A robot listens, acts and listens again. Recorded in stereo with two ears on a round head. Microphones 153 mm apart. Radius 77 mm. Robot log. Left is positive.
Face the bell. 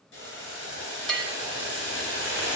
cmd yaw +30
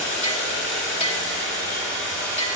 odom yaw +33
note: So it is at 145° left.
cmd yaw +145
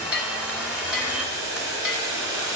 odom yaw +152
end: Found it: a bell, straight ahead, 1 to 2 m away.